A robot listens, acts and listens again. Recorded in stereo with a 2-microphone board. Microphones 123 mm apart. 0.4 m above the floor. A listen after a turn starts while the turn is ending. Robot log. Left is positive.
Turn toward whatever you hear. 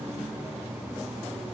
cmd idle
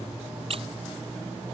note: The squeak: about 50° right or 130° right.
cmd yaw -50
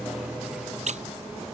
note: So it is at 75° right.
cmd yaw -75
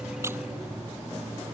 cmd idle
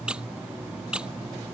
note: The squeak is now 10° right.
cmd yaw -10
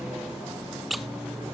end: Found it: a squeak, straight ahead.